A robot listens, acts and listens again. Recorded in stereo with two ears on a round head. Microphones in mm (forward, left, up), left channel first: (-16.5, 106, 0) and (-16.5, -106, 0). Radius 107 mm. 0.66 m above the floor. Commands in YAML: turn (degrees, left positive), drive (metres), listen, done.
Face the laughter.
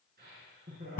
turn: -40
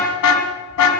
listen: true
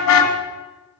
listen: true
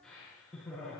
done: "Found it: laughter, straight ahead."